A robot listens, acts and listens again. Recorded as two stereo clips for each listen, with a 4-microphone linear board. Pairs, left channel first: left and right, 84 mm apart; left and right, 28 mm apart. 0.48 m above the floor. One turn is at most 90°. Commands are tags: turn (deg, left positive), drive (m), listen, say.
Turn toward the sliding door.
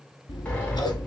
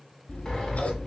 <turn deg="30"/>
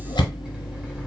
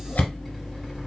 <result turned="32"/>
<listen/>
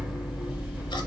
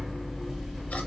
<turn deg="-15"/>
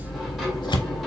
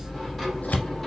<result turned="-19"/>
<listen/>
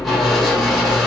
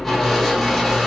<say>Facing the sliding door, 1 to 2 m away.</say>